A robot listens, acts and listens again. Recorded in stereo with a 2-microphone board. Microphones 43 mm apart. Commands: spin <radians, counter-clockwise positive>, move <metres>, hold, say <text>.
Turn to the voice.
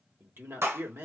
spin -1.13
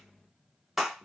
hold
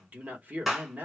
spin -0.70
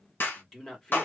spin 0.17
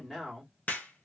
say Found it: a man speaking, straight ahead, 1 to 2 m away.